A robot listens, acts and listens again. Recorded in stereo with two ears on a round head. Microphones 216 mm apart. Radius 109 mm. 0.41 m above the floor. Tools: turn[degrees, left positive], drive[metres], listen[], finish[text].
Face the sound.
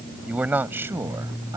Action: turn[-30]
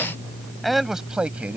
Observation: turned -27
Action: turn[-30]
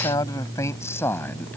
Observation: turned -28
Thought: So it is at 10° left.
Action: turn[10]
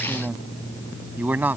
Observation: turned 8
Thought: The man speaking is now 10° right.
Action: turn[-10]
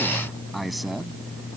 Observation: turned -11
Action: listen[]
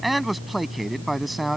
Action: finish[Facing the man speaking.]